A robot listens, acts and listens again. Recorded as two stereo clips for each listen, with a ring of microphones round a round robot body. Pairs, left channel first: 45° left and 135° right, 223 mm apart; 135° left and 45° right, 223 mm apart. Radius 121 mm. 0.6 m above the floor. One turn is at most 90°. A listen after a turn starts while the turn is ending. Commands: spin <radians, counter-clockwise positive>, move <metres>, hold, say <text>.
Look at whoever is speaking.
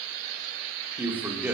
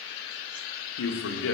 spin 1.57
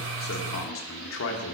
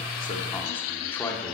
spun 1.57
spin 0.96
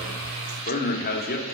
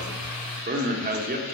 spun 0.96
say Found it: a man speaking, straight ahead, 1 to 2 m away.